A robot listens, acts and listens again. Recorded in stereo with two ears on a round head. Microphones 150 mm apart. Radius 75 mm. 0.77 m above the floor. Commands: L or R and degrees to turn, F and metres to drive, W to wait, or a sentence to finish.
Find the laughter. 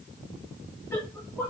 L30
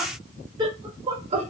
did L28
R35
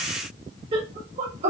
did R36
R40
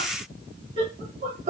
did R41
R35
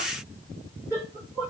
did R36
R15
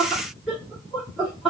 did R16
Facing the laughter.